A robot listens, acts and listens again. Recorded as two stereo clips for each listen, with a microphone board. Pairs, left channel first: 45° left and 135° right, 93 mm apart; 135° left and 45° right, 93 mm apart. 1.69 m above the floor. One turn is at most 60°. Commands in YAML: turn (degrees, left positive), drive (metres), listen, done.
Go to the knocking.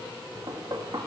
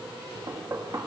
turn: -60
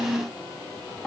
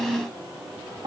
turn: -35
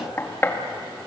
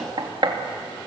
turn: -20
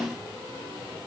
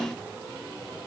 listen: true
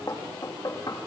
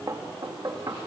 drive: 1.0
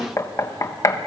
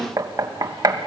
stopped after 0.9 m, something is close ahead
done: "Arrived at the knocking, straight ahead."